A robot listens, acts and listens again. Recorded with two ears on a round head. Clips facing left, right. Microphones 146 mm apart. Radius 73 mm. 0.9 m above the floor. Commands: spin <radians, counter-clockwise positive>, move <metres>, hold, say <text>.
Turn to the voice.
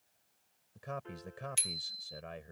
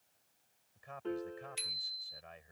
spin 1.13
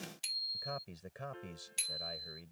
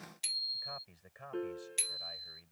spin 0.87
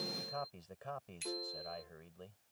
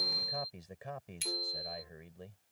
spin -0.26
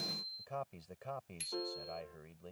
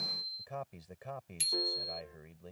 say Facing the man speaking.